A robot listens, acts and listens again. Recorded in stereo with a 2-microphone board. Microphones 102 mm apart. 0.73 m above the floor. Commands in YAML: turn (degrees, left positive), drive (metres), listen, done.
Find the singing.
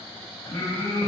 turn: 30
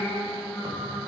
done: "Found it: singing, straight ahead, 2 to 4 m away."